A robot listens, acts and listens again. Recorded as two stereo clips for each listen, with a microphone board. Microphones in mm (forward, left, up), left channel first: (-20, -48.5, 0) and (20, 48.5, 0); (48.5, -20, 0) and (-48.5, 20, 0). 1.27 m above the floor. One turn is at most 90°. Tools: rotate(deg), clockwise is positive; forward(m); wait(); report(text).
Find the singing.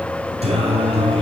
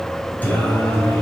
rotate(-45)
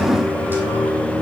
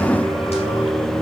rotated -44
rotate(10)
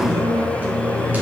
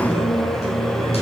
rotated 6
rotate(10)
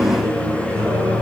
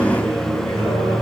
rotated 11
report("Facing the singing, over 4 m away.")